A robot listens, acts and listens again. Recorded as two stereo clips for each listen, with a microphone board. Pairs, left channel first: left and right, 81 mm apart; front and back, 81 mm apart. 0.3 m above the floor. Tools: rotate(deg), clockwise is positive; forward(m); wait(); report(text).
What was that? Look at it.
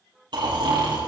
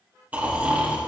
rotate(110)
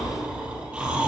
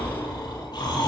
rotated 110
rotate(15)
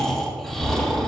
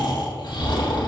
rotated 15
report("Facing the snoring.")